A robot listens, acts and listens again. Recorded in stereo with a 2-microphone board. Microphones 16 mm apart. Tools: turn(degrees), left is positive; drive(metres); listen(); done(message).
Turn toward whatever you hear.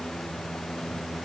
listen()
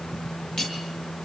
turn(degrees=60)
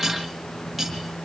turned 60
done("Facing the cutlery clinking.")